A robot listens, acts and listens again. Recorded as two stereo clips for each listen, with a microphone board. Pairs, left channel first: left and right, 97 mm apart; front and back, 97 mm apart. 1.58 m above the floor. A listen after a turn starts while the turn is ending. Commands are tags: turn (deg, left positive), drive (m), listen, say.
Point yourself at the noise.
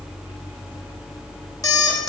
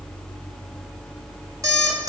<turn deg="135"/>
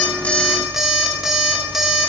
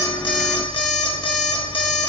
<say>Found it: an alarm clock, straight ahead, 1 to 2 m away.</say>